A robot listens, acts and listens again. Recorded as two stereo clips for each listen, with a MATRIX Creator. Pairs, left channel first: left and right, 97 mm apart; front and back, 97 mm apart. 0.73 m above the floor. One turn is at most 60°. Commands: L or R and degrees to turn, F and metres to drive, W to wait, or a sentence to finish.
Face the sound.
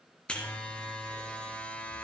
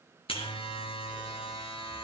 L10
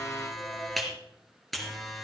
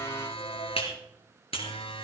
Found it: a buzzer, straight ahead.